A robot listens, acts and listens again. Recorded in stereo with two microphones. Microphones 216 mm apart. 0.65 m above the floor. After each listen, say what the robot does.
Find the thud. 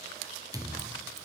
Turn 15° right.
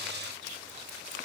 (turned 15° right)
Keep listening.
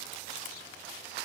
I heard a thud, but can't make it out now. It was about straight ahead or 150° right.